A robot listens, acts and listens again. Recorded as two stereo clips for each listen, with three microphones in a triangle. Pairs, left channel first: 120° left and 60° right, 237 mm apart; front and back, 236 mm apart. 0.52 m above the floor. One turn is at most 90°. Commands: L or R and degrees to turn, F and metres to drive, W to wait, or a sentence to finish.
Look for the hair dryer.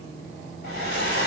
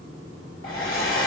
R20
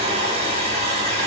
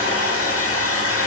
Facing the hair dryer.